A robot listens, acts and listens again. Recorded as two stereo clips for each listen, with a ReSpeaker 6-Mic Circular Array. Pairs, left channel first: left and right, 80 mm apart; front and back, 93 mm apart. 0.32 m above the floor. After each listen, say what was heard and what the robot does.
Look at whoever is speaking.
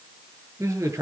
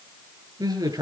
The man speaking: 135° right. Turn 135° right.
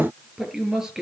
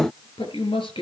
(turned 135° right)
Found it: a man speaking, straight ahead, over 4 m away.